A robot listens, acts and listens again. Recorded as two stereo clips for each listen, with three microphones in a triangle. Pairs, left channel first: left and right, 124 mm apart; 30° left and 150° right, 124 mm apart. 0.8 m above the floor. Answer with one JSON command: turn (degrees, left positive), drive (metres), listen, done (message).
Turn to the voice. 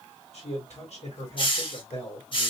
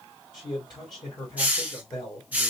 {"turn": 80}
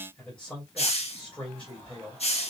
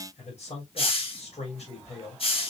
{"turn": 10}
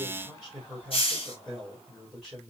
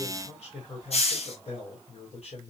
{"done": "Found it: a man speaking, straight ahead."}